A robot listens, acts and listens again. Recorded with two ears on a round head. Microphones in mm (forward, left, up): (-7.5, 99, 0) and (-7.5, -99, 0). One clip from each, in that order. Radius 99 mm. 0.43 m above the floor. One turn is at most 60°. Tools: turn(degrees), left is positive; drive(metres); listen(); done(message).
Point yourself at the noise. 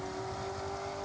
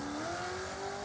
listen()
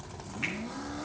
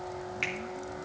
turn(degrees=-60)
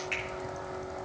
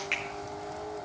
turn(degrees=-30)
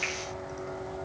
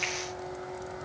listen()
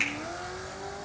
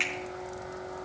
done("Facing the finger snap, 2 to 4 m away.")